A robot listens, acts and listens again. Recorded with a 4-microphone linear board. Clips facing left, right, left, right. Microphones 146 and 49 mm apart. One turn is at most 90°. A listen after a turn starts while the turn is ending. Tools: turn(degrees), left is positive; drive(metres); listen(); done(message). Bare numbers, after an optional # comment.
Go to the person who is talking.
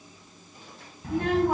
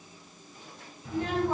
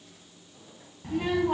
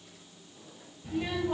# The child speaking: about 65° left or 115° left.
turn(65)
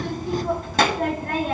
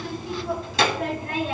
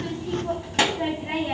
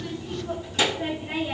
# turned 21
# So it is at 50° left.
turn(50)
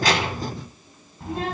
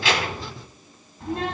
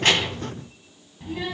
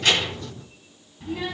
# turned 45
drive(1.0)
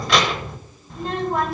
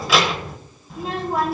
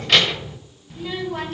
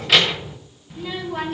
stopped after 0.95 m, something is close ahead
done("I am next to the child speaking.")